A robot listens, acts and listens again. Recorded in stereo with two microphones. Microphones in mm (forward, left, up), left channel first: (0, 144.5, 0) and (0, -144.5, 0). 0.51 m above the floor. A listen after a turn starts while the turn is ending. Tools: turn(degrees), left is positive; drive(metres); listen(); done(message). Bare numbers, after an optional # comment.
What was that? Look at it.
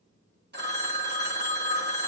# The phone ringing: about 35° right or 145° right.
turn(-35)
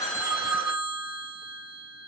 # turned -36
# So it is at 105° right.
turn(-105)
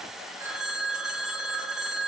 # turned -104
done("Found it: a phone ringing, straight ahead.")